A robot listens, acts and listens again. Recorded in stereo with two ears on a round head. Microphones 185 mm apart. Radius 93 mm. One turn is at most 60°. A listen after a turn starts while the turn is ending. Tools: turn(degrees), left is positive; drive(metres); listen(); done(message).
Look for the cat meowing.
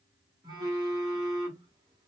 listen()
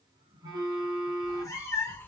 turn(degrees=30)
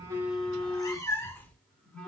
turn(degrees=30)
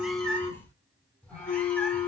turn(degrees=30)
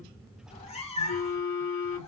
turn(degrees=60)
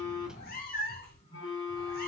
turn(degrees=45)
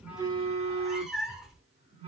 done("Found it: a cat meowing, straight ahead.")